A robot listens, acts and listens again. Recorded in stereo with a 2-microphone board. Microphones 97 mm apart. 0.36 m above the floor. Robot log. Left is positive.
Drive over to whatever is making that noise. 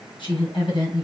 note: The woman speaking: about 60° left or 120° left.
cmd yaw +60
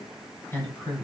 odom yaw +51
note: So it is at 30° left.
cmd yaw +30
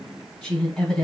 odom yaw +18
note: The woman speaking is now 15° left.
cmd yaw +15
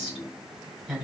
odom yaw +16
cmd fwd 1.0
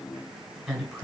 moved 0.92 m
cmd fwd 1.0
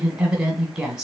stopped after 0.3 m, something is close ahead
note: The woman speaking is now 10° right.
cmd yaw -10
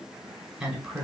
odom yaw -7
end: I am next to the woman speaking.